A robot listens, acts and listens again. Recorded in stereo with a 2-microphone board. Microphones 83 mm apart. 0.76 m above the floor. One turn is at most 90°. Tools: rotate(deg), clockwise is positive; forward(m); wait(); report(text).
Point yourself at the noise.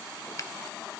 rotate(-40)
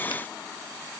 wait()
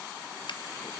wait()
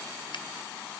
report("I heard a finger snap, but can't make it out now. It was about straight ahead or 100° left.")